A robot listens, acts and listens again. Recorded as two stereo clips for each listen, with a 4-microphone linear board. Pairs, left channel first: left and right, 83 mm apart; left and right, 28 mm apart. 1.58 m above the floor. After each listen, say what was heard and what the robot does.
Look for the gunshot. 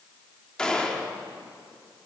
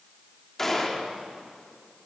Turn 30° left.
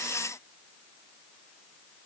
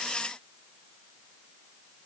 Keep listening.
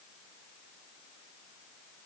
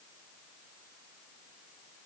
I heard a gunshot, but can't make it out now. It was about 20° right or 140° left.